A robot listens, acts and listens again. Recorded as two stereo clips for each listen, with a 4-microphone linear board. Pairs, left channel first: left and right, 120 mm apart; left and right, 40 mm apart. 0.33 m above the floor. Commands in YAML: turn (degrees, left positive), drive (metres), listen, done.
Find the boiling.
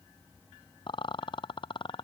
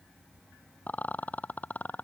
listen: true
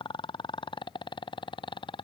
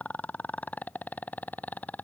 listen: true
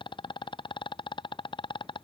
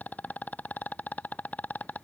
done: "I can't make out boiling to turn to."